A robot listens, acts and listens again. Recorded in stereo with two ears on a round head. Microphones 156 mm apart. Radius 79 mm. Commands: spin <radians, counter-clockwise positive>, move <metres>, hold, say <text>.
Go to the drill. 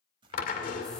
spin 0.87
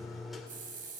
move 1.0
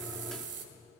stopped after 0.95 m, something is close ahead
hold
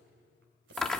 say I am next to the drill.